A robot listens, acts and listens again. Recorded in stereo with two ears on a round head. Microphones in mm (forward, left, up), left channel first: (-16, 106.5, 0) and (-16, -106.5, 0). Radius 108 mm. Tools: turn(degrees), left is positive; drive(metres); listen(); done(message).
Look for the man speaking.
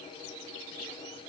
listen()
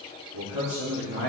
turn(degrees=-90)
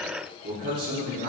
turn(degrees=-35)
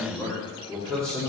done("Found it: a man speaking, straight ahead.")